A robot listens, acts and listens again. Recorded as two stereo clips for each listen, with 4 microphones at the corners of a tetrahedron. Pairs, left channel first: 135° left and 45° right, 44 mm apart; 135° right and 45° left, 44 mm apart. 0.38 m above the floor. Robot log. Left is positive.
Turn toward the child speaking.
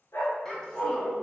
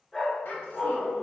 note: The child speaking: 155° right.
cmd yaw -155
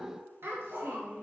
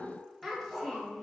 note: The child speaking is now 50° right.
cmd yaw -50
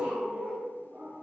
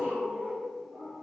cmd idle
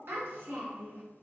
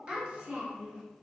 note: The child speaking is now 20° right.
cmd yaw -20
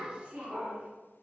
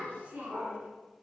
end: Found it: a child speaking, straight ahead, 2 to 4 m away.